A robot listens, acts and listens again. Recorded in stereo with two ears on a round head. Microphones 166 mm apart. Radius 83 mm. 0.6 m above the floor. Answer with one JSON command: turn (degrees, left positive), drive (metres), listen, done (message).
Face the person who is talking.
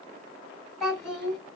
{"turn": 15}
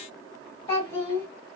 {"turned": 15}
{"turn": 150}
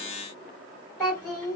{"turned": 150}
{"done": "Found it: a child speaking, straight ahead."}